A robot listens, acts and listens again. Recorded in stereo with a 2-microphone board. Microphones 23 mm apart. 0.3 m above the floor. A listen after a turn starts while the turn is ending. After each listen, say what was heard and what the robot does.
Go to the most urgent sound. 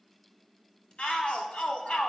The shout: about 55° left or 125° left. Turn 55° left.
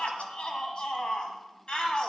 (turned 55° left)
So it is at 50° left. Turn 50° left.
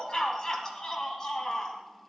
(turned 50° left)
The shout is now 30° left. Turn 30° left.
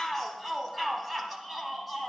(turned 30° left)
Drive 1.0 m forward.
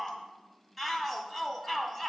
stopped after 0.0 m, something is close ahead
Blocked. The shout is further on, straight ahead.